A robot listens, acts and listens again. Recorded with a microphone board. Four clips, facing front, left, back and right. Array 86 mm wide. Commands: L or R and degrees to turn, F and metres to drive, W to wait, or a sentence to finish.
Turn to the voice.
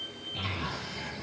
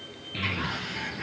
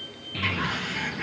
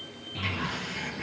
L125
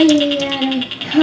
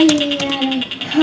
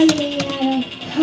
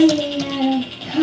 L10
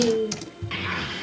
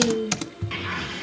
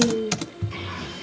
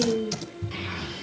Found it: a child speaking, straight ahead, over 4 m away.